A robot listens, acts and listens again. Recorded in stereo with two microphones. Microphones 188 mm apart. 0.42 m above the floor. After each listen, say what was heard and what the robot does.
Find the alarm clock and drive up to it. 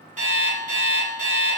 The alarm clock: about 45° right or 135° right. Turn 45° right.
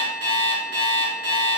So it is at 90° right. Turn 90° right.
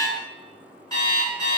The alarm clock is now 20° left. Turn 20° left.
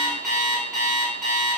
Drive 1.0 m forward.
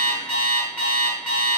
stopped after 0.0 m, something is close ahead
The alarm clock is now 10° left. Turn 10° left.
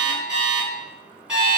Blocked. The alarm clock is further on, straight ahead.